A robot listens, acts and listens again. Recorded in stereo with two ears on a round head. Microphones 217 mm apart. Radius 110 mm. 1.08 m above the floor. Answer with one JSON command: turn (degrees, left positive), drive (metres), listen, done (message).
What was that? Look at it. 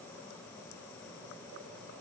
{"listen": true}
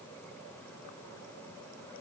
{"listen": true}
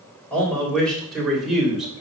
{"turn": -30}
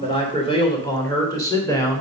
{"turn": 10}
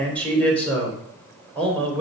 {"done": "Found it: a man speaking, straight ahead, 2 to 4 m away."}